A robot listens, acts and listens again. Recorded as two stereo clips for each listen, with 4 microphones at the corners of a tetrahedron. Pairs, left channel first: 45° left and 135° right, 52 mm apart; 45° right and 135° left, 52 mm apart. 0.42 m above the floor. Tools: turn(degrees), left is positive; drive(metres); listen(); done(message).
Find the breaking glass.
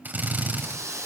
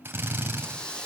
listen()
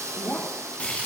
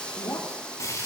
turn(degrees=-20)
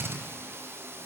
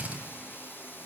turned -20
done("Facing where the breaking glass came from. I can't hear it now.")